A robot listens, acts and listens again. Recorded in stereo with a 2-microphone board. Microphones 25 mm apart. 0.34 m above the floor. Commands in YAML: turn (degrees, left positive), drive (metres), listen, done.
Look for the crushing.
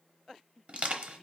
turn: -55
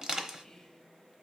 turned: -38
turn: -35
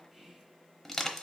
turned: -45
turn: 10
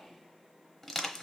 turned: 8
done: "Facing the crushing, under 1 m away."